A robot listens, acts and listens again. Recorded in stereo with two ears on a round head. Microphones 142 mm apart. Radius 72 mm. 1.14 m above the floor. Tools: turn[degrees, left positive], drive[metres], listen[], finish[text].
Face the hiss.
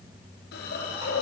Thought: The hiss: about 65° left or 115° left.
Action: turn[65]
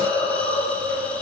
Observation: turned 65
Action: finish[Facing the hiss.]